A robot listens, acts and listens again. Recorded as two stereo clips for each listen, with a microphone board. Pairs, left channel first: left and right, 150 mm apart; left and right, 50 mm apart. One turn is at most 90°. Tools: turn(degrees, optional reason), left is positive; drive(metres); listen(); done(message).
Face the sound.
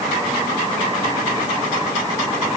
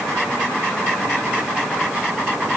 listen()
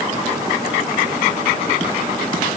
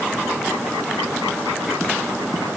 listen()
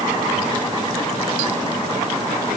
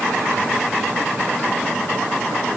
done("I can't make out anything to turn to.")